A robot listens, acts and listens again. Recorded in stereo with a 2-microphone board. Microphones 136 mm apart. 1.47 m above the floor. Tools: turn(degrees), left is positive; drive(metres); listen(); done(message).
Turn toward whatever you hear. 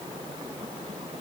listen()
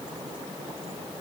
listen()
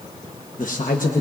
turn(degrees=90)
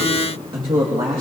turn(degrees=-40)
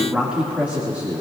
turn(degrees=-15)
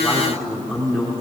done("Facing the man speaking, 2 to 4 m away.")